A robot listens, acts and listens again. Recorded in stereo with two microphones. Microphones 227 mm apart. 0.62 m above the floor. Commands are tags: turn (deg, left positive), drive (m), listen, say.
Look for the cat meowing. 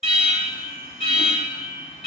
<listen/>
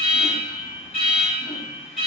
<listen/>
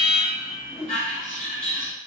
<say>I can't make out a cat meowing, only an alarm and a whoosh.</say>